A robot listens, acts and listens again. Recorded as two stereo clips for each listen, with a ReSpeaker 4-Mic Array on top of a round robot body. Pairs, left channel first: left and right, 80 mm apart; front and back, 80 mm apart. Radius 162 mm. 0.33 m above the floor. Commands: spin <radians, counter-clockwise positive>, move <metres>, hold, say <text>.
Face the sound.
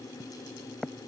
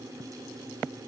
hold
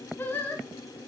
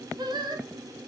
spin 2.71
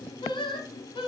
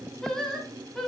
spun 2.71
spin 1.48
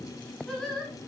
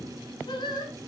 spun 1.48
spin 0.17
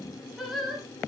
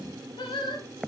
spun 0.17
say Facing the singing.